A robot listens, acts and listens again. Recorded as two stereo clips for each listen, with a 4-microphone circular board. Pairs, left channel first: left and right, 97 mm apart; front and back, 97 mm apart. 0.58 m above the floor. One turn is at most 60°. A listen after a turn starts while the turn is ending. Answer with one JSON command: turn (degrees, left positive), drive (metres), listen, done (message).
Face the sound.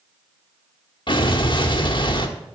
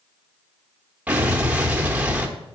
{"turn": 60}
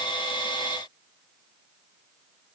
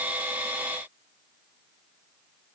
{"turn": 45}
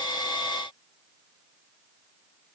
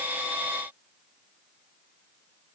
{"done": "Facing where the explosion came from. I can't hear it now."}